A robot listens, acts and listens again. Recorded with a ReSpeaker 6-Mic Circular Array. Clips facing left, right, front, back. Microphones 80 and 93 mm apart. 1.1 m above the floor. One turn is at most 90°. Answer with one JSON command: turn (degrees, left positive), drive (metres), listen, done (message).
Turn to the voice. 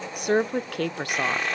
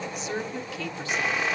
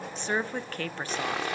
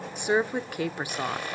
{"turn": 90}
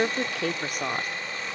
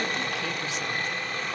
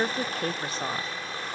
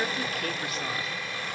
{"turn": 55}
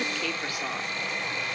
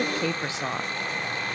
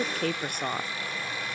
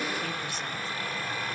{"turn": -25}
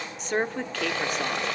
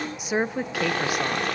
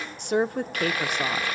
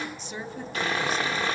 {"turn": -10}
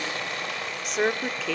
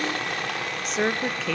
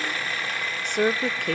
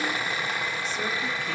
{"done": "Found it: a woman speaking, straight ahead, under 1 m away."}